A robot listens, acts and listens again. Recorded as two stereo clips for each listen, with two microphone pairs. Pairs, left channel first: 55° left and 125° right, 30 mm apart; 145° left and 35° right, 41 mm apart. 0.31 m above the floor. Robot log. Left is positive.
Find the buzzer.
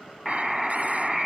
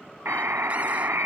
note: The buzzer: 40° right.
cmd yaw -40
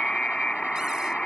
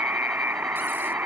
note: The buzzer is now 10° right.
cmd yaw -10
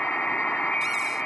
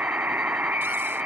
end: Facing the buzzer.